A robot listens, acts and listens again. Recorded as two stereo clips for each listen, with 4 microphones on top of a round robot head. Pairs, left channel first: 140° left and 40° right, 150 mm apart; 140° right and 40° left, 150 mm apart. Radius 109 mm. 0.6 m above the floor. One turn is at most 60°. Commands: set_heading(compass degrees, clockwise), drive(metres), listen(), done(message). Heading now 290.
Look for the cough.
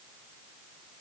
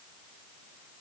listen()
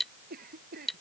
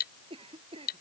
set_heading(305)
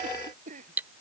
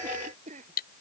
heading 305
done("Facing the cough.")